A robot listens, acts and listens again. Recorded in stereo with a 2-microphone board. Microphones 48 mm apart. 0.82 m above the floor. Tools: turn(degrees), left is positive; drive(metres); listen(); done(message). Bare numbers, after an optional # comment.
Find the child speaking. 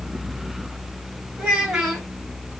# The child speaking: about 25° right or 155° right.
turn(-25)
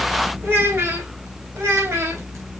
# So it is at 115° right.
turn(-115)
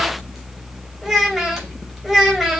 done("Facing the child speaking, 2 to 4 m away.")